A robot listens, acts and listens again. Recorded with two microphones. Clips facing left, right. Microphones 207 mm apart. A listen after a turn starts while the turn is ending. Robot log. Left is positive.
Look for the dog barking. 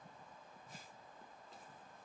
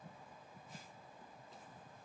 cmd idle
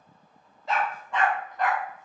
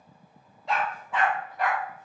cmd yaw -30
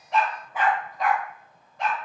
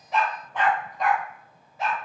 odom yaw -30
cmd yaw -30
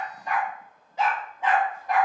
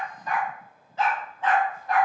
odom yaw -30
note: So it is at 15° left.
cmd yaw +15
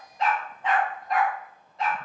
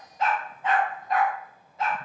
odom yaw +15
end: Found it: a dog barking, straight ahead.